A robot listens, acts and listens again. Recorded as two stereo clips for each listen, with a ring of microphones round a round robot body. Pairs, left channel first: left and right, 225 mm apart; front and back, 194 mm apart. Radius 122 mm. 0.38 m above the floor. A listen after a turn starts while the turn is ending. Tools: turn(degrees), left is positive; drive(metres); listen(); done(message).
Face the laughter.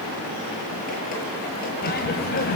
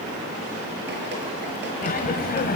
turn(degrees=40)
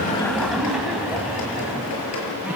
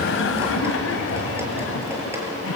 done("Facing the laughter, 2 to 4 m away.")